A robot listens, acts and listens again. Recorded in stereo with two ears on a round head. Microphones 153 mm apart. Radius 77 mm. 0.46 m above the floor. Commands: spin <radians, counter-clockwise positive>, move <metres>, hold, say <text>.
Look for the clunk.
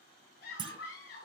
spin -0.52
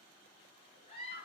hold
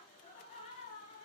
say I heard a clunk, but can't make it out now. It was about straight ahead or 120° right.